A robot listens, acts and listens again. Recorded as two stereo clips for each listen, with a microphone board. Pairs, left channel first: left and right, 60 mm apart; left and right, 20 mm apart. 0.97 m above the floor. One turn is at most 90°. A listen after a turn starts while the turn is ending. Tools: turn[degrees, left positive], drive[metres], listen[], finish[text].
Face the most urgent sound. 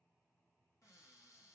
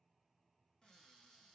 Action: listen[]
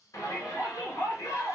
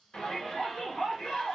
Thought: The shout: about 60° left or 120° left.
Action: turn[60]
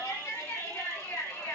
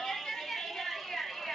Thought: So it is at 50° left.
Action: turn[50]
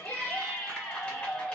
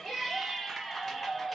Thought: The shout is now 25° left.
Action: turn[25]
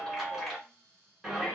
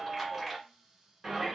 Action: finish[Found it: a shout, straight ahead.]